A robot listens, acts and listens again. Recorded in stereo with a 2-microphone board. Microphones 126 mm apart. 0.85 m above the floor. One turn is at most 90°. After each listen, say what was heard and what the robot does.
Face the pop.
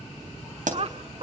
Turn 90° right.
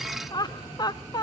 I heard a pop from this way, but can't make it out now.